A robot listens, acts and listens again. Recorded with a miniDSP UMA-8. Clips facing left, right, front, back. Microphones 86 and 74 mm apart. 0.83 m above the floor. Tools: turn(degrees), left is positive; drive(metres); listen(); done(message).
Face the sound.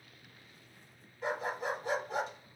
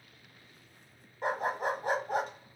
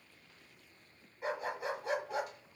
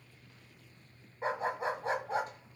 turn(degrees=-125)
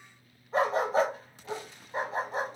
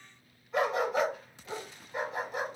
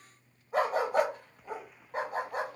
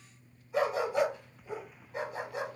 turn(degrees=40)
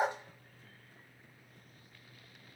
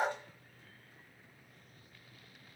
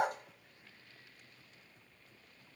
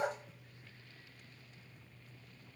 turn(degrees=20)
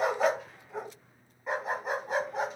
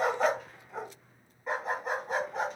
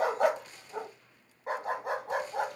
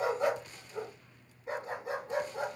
done("Facing the dog barking.")